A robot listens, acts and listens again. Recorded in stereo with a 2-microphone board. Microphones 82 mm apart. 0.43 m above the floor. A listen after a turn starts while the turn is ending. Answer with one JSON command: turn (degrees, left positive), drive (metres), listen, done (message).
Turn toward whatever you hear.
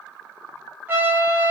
{"turn": -25}
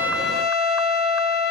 {"done": "Found it: a trumpet, straight ahead."}